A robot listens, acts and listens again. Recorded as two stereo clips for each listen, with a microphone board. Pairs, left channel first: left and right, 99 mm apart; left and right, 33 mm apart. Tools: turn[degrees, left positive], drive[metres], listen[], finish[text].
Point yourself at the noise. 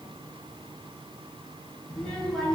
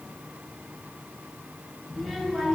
Action: turn[30]
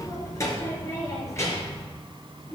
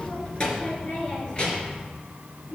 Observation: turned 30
Thought: So it is at 150° left.
Action: turn[150]
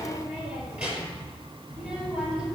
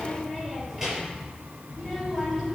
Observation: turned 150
Thought: The child speaking is now 10° right.
Action: turn[-10]
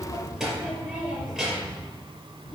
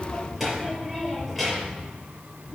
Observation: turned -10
Action: finish[Facing the child speaking.]